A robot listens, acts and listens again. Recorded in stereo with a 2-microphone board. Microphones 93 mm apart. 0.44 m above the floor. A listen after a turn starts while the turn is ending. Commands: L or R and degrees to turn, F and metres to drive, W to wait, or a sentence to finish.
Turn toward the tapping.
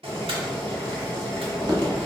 R50
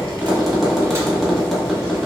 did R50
Facing the tapping, 1 to 2 m away.